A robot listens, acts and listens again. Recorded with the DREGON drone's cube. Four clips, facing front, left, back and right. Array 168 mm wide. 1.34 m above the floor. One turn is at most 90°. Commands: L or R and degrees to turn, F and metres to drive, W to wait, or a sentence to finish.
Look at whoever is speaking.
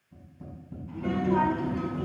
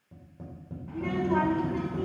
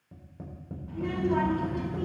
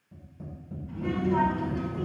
L90
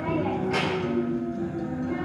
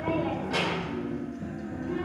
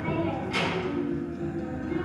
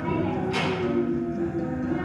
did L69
L40
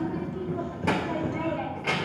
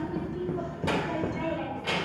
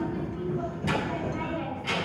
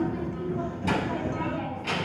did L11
L30
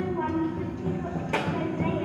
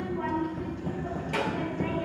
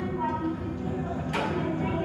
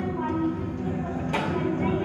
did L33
Facing the child speaking, 2 to 4 m away.